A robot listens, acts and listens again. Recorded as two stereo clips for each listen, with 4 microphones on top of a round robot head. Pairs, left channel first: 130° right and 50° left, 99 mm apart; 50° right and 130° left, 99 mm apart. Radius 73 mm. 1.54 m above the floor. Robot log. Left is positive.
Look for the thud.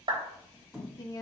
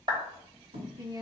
note: The thud: 140° left.
cmd yaw +140
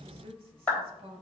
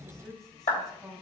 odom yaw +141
end: I heard a thud from this way, but can't make it out now.